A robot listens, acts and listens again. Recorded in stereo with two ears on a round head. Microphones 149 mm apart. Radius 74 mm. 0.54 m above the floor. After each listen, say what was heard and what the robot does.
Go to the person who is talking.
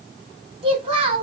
The child speaking: about 40° right or 140° right. Turn 40° right.
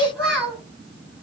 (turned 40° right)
Drive 1.0 m forward.
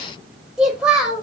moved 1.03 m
Drive 1.0 m forward.
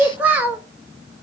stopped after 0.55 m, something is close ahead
The child speaking is now 10° right. Turn 10° right.
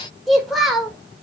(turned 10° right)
Arrived at the child speaking, straight ahead.